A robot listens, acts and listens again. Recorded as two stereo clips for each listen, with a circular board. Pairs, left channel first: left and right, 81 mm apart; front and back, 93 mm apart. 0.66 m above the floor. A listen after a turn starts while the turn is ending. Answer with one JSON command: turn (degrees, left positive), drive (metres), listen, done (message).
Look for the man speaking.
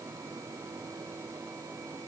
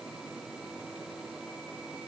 {"listen": true}
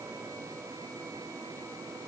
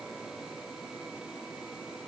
{"listen": true}
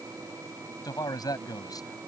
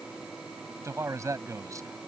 {"turn": 125}
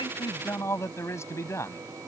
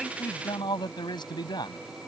{"turn": 35}
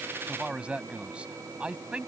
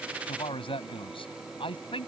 {"turn": -15}
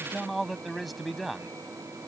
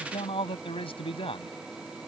{"done": "Found it: a man speaking, straight ahead."}